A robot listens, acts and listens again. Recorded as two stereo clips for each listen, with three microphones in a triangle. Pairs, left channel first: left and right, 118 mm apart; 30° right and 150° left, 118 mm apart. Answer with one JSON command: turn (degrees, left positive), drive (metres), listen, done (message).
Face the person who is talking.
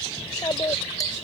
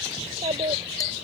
{"turn": 140}
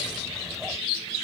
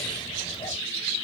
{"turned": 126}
{"turn": 15}
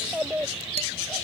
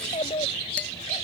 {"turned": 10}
{"turn": -10}
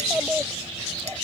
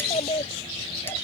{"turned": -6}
{"turn": -10}
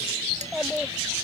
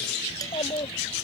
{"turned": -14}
{"done": "Facing the child speaking."}